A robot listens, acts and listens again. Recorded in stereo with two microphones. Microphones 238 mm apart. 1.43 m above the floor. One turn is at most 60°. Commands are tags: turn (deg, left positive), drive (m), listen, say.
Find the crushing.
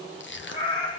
<turn deg="50"/>
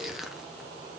<say>Found it: crushing, straight ahead, 1 to 2 m away.</say>